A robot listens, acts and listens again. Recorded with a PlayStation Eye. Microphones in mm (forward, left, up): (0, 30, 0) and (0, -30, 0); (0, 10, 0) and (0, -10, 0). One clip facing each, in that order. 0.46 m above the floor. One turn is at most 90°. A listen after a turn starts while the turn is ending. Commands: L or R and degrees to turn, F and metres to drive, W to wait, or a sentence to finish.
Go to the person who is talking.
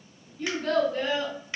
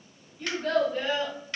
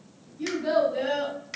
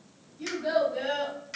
R30
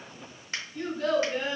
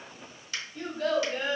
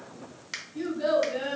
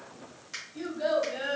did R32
R90
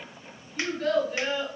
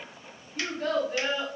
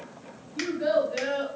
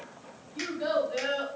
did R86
R55
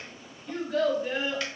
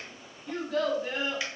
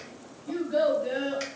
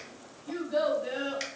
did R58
F1.0
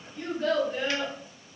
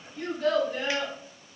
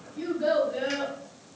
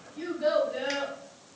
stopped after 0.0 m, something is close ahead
Blocked. The child speaking is further on, straight ahead.